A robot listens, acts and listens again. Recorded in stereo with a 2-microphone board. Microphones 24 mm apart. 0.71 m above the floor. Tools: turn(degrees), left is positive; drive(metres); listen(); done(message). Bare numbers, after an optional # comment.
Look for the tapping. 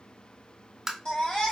# The tapping: about 20° right or 160° right.
turn(-20)
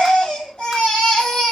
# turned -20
listen()
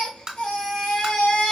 # So it is at 140° right.
turn(-140)
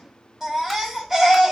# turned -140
listen()
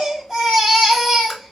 listen()
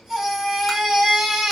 done("I heard tapping from this way, but can't make it out now.")